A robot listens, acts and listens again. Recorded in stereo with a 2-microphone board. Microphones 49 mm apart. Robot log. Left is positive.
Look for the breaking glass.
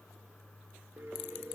cmd idle
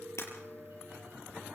note: The breaking glass: about 75° left or 105° left.
cmd yaw +75
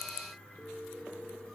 cmd idle
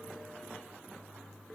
end: I heard breaking glass, but can't make it out now. It was about straight ahead or 30° left.